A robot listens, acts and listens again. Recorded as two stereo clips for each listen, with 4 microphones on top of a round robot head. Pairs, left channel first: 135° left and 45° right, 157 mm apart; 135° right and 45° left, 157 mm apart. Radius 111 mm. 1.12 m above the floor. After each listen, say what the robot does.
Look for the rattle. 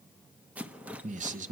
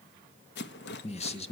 Turn 130° right.
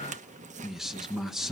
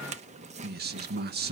Facing the rattle, 1 to 2 m away.